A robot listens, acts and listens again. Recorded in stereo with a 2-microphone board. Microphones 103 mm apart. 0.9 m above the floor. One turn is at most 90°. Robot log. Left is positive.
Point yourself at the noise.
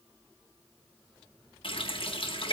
note: The running tap: about 60° left or 120° left.
cmd yaw +60
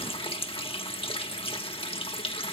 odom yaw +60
note: So it is at 60° left.
cmd yaw +60
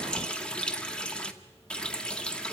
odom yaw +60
note: The running tap is now 10° left.
cmd yaw +10
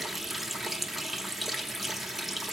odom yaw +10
end: Found it: a running tap, straight ahead, 1 to 2 m away.